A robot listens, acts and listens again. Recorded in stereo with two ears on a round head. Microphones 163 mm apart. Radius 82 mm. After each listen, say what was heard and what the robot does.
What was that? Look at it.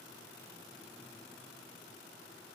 Keep listening.
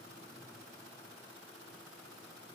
Keep listening.
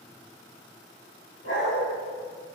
Turn 90° left.
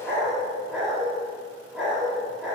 Found it: a dog barking, straight ahead, over 4 m away.